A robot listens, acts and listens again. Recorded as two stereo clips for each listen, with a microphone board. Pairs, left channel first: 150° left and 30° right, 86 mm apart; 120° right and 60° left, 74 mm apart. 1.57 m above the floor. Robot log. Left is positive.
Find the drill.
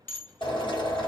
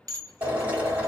note: The drill: 130° left.
cmd yaw +130
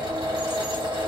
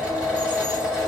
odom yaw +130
note: The drill is now 15° right.
cmd yaw -15
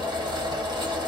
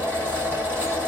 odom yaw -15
end: Found it: a drill, straight ahead.